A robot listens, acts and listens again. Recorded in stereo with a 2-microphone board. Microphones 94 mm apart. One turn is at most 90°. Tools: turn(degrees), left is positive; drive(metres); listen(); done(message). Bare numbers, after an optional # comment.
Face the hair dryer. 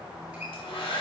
turn(90)
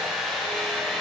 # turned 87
done("Found it: a hair dryer, straight ahead, 2 to 4 m away.")